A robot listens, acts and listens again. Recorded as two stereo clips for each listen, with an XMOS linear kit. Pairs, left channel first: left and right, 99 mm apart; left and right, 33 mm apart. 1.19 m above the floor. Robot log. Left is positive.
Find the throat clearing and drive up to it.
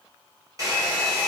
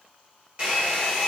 cmd idle
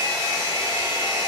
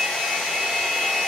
cmd idle
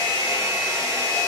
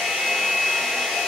end: I can't make out throat clearing, only a hair dryer.